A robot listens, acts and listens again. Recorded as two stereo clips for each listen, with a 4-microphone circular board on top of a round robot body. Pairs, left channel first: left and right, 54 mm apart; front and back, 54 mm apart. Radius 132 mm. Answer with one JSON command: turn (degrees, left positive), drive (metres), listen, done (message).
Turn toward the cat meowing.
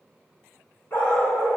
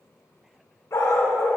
{"listen": true}
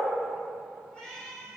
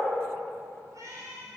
{"turn": 165}
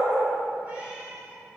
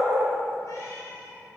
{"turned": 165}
{"turn": -25}
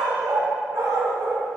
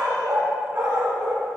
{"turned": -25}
{"listen": true}
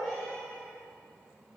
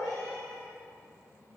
{"listen": true}
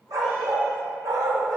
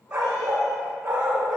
{"done": "Facing where the cat meowing came from. I can't hear it now."}